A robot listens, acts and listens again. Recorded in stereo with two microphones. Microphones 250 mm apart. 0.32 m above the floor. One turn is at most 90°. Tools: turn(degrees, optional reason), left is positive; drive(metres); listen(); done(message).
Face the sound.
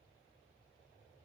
listen()
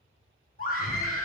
turn(degrees=35, reason="The scream: about 35° left or 145° left.")
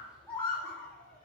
done("Found it: a scream, straight ahead, 2 to 4 m away.")